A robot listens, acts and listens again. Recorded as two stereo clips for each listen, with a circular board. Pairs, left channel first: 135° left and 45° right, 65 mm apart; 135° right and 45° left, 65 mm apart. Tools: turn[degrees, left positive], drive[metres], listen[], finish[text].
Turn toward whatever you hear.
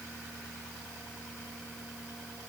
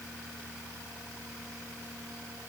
Action: listen[]
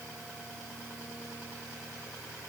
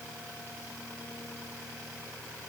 Action: listen[]
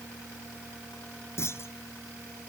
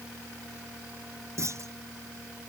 Thought: The clunk: 90° left.
Action: turn[90]
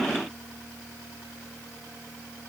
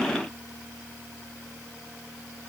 Action: finish[Facing where the clunk came from. I can't hear it now.]